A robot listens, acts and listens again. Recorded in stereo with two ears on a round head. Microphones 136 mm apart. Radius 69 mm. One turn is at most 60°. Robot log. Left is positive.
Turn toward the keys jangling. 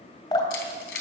cmd yaw +60
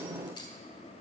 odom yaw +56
note: Nothing new. It was at 35° left.
cmd yaw +35
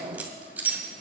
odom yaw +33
note: The keys jangling is now 10° right.
cmd yaw -10
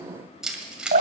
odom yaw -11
end: Found it: keys jangling, straight ahead, 1 to 2 m away.